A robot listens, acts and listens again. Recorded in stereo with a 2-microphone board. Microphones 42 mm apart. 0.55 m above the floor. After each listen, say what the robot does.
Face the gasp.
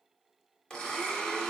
Keep listening.
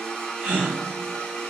Turn 35° right.
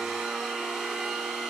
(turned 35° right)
Keep listening.
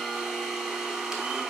I heard a gasp, but can't make it out now. It was about straight ahead or 110° right.